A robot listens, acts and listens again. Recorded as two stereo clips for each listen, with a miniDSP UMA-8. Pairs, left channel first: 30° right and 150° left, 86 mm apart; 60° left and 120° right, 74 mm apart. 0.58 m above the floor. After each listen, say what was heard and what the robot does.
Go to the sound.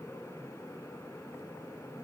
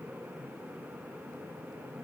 Keep listening.
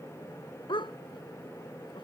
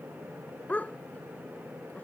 The dog barking: 10° right. Turn 10° right.
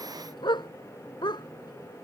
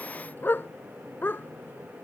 Drive 1.0 m forward.
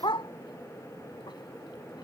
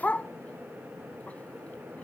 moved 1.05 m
The dog barking is now 10° right. Turn 10° right.
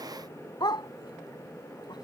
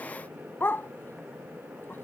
Drive 1.0 m forward.
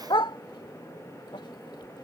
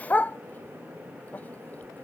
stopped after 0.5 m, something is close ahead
Arrived at the dog barking, straight ahead.